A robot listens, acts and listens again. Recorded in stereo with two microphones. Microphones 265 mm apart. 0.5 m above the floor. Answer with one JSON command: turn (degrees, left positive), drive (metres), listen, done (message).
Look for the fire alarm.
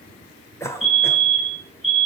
{"turn": -60}
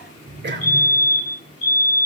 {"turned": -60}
{"done": "Found it: a fire alarm, straight ahead."}